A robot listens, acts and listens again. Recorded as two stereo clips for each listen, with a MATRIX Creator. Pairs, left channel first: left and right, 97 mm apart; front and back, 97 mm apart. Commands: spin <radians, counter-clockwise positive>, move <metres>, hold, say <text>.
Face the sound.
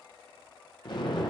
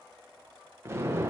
spin 2.09
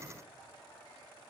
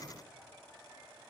say I heard an explosion from this way, but can't make it out now.